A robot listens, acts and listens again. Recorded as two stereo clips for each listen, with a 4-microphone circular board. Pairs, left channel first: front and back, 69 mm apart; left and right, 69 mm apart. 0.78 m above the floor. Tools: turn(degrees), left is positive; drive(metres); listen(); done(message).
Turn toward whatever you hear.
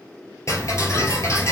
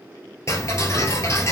turn(degrees=45)
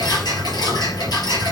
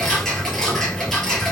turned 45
turn(degrees=10)
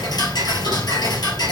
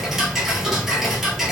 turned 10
done("Facing the ticking.")